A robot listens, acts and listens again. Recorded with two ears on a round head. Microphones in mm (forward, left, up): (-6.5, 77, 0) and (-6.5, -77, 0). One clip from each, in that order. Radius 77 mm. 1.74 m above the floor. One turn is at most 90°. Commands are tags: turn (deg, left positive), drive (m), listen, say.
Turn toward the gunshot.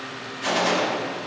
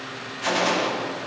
<turn deg="-30"/>
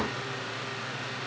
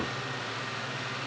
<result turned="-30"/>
<listen/>
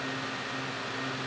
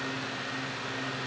<say>I heard a gunshot, but can't make it out now. It was about 20° left or 140° right.</say>